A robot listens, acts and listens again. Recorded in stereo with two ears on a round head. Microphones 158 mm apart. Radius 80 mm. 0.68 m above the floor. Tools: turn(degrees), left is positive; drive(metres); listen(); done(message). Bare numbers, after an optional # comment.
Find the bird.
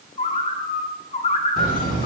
# The bird: about 35° left or 145° left.
turn(35)
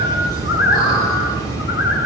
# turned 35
# So it is at 105° left.
turn(105)
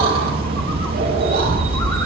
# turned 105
listen()
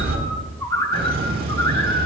# The bird is now 20° left.
turn(20)
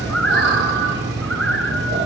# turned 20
done("Found it: a bird, straight ahead.")